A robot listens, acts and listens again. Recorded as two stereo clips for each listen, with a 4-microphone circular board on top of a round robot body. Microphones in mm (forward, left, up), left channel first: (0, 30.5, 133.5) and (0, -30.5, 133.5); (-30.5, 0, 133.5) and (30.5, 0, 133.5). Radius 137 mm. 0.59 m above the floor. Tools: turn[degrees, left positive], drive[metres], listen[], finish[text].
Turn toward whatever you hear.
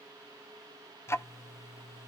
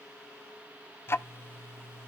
Thought: The ticking: 130° left.
Action: turn[130]
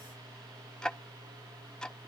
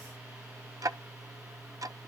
Thought: The ticking is now 15° left.
Action: turn[15]
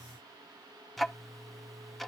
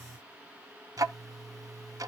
Action: finish[Facing the ticking.]